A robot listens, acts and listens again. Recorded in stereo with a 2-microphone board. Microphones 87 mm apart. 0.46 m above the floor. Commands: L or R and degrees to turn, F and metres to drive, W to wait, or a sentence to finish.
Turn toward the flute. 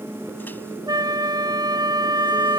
R55
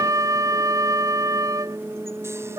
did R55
R55
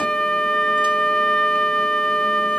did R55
L10
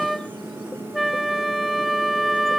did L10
Facing the flute.